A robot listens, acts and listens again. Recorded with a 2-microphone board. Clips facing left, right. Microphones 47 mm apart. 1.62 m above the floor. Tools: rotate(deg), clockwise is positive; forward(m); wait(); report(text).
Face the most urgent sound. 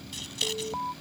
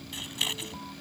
rotate(-40)
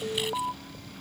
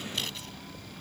rotate(-100)
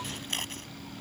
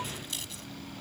wait()
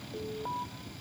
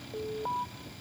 rotate(10)
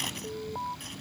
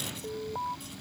report("Facing the alarm.")